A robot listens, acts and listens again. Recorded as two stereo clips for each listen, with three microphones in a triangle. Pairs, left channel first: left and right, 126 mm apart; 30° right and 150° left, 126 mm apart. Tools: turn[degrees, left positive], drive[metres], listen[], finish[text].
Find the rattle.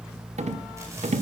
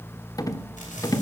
Thought: The rattle: 90° right.
Action: turn[-90]
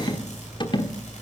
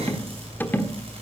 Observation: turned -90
Thought: The rattle is now 45° left.
Action: turn[45]
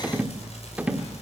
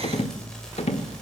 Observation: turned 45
Thought: The rattle is now 10° right.
Action: turn[-10]
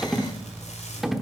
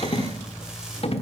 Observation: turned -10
Action: finish[Found it: a rattle, straight ahead.]